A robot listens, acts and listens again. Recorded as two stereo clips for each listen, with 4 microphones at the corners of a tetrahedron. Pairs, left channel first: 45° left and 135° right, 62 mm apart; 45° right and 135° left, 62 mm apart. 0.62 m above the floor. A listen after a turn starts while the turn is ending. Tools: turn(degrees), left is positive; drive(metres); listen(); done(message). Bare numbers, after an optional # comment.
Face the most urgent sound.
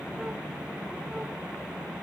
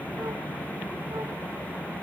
listen()
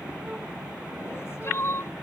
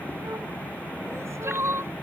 # The crying: 90° left.
turn(90)
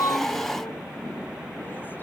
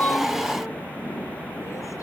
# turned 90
listen()
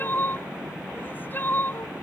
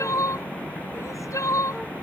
# The crying is now 10° right.
turn(-10)
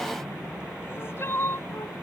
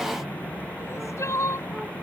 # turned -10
done("Facing the crying.")